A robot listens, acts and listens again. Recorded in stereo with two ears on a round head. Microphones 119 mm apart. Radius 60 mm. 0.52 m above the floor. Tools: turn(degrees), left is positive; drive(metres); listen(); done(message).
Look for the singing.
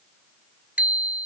listen()
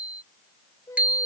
turn(degrees=25)
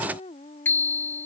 turn(degrees=130)
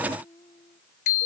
turn(degrees=35)
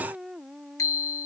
done("Facing the singing.")